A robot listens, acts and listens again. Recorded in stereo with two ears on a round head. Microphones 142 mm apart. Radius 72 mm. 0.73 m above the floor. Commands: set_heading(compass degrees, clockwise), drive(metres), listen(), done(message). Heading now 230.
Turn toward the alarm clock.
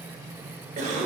listen()
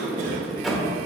listen()
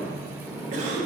done("I can't make out an alarm clock to turn to.")